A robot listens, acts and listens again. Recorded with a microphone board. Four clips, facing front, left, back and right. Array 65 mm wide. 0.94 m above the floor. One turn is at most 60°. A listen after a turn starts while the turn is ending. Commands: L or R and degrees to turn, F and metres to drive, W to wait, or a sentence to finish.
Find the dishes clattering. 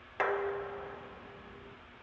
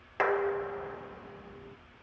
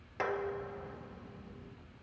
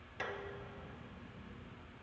L60
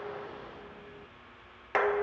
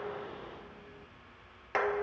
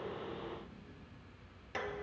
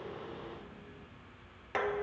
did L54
L15
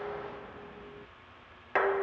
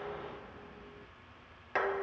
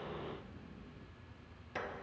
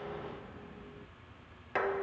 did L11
Facing the dishes clattering.